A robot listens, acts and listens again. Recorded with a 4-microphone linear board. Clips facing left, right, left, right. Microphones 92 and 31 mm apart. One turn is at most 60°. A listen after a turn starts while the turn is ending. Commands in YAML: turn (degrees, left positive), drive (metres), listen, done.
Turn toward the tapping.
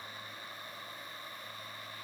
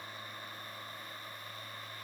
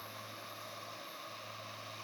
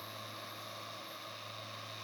listen: true
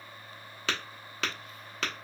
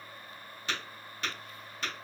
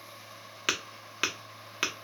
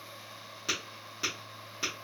turn: 60
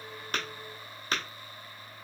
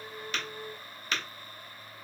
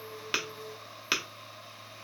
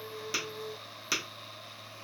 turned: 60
turn: 35
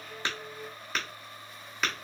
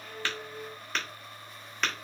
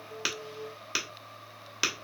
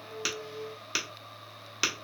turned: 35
done: "Found it: tapping, straight ahead."